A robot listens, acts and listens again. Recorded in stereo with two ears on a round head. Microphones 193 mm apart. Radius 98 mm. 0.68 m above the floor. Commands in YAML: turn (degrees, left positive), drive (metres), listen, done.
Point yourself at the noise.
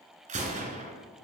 turn: -35
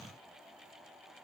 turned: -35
listen: true
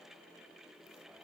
done: "I heard a gunshot, but can't make it out now. It was about straight ahead or 110° right."